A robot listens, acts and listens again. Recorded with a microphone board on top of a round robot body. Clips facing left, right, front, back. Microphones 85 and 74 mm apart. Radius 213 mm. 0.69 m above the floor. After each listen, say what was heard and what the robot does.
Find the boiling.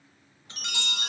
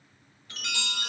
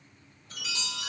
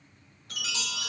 Keep listening.
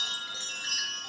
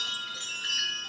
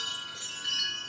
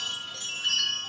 Keep listening.
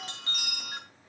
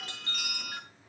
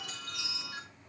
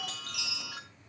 The boiling: 50° left. Turn 50° left.
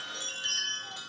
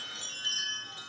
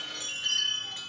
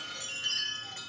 Keep listening.
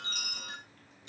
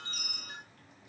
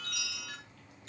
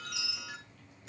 The boiling is now 15° right. Turn 15° right.
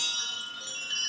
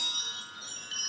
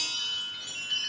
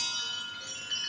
Keep listening.
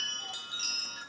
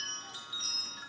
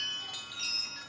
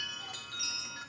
Keep listening.
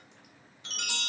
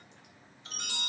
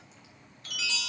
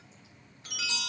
Facing the boiling, over 4 m away.